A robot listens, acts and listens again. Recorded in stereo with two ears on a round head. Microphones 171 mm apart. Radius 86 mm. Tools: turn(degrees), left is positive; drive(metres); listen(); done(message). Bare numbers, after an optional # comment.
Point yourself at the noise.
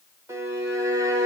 # The violin: about 15° right or 165° right.
turn(-15)
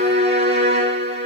# So it is at 145° right.
turn(-145)
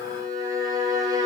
# The violin is now 20° right.
turn(-20)
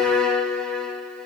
done("Found it: a violin, straight ahead.")